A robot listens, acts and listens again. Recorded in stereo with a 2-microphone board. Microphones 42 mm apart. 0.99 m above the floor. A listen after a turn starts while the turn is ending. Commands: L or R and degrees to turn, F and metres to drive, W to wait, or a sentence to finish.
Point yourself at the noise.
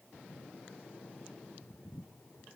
W
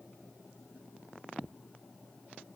W
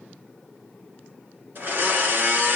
R50
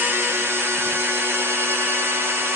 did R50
R75
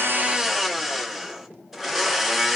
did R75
Facing the blender, 1 to 2 m away.